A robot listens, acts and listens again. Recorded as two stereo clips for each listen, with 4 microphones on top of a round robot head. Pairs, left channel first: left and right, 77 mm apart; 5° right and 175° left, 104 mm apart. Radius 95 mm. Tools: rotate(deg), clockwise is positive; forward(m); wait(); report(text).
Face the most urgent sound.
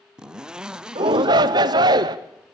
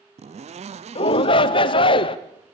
rotate(50)
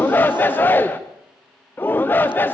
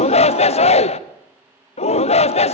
rotate(-20)
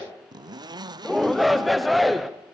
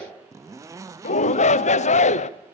report("Found it: a shout, straight ahead.")